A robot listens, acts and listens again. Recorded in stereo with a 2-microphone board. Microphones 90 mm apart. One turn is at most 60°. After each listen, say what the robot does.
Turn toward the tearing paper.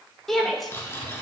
Turn 30° left.
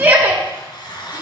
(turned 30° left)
Turn 60° left.
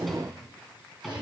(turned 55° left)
Turn 60° left.
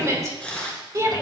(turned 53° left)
Turn 15° left.
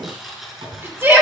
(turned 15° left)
Facing the tearing paper.